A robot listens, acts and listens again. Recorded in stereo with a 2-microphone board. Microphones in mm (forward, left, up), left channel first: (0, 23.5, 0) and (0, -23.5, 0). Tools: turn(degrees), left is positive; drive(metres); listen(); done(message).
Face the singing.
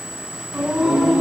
turn(degrees=-30)
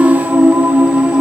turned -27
turn(degrees=-145)
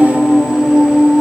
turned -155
done("Found it: singing, straight ahead.")